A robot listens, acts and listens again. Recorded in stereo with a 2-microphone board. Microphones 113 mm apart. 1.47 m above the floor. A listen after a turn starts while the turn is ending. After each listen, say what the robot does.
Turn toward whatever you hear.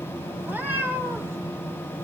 Turn 20° right.
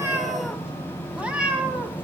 Turn 30° right.
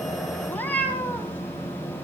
Turn 15° left.
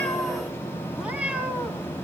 Turn 10° right.
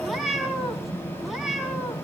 Found it: a cat meowing, straight ahead.